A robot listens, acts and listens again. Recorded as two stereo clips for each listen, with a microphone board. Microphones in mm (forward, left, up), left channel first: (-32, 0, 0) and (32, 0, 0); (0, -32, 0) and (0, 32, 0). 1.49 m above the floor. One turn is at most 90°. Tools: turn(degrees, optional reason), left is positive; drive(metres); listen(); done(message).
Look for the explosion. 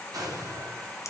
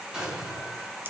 turn(degrees=15, reason="The explosion: 15° left.")
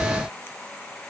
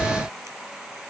done("I heard an explosion from this way, but can't make it out now.")